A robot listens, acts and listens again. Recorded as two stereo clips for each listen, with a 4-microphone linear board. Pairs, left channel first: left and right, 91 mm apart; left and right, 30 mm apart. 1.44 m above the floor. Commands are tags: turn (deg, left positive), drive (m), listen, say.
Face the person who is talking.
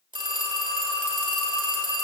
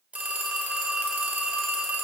<listen/>
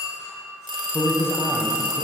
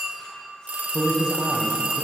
<turn deg="25"/>
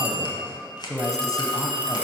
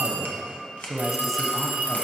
<say>Found it: a man speaking, straight ahead.</say>